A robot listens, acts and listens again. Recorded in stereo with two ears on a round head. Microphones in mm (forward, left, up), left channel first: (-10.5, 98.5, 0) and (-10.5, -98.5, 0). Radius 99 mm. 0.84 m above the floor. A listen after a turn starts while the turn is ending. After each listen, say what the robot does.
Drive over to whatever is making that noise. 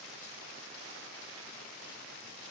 Keep listening.
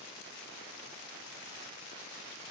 Keep listening.
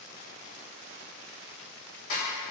Turn 65° left.
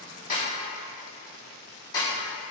Turn 20° left.
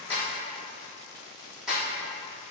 Drive 1.0 m forward.
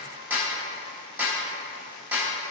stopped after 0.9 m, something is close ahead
Turn 10° right.
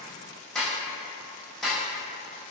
I am next to the snare drum.